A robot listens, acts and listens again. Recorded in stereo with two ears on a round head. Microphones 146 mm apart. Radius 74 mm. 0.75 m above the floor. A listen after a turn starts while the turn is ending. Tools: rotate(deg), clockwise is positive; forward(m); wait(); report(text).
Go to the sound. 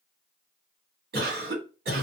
rotate(65)
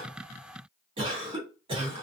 rotate(35)
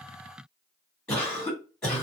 forward(1.0)
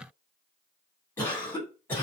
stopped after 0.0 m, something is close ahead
rotate(-15)
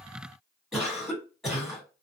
report("Something is in my way. I am facing the cough but have not reached it.")